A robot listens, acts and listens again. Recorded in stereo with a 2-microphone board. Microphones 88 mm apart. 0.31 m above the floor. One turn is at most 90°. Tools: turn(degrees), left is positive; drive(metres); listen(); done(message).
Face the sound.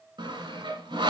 turn(degrees=-65)
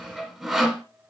done("Found it: sawing, straight ahead.")